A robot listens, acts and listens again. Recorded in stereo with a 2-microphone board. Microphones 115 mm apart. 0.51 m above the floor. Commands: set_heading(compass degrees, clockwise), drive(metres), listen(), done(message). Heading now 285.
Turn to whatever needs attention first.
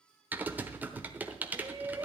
set_heading(315)
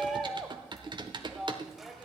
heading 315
done("Found it: a shout, straight ahead, 1 to 2 m away.")